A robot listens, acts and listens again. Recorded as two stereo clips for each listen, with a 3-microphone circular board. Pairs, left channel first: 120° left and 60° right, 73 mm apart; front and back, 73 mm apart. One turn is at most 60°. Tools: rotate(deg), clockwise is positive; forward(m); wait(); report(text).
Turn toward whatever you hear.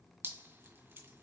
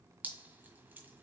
rotate(60)
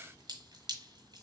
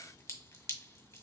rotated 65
rotate(45)
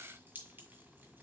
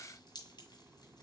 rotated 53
report("Facing the dripping, 1 to 2 m away.")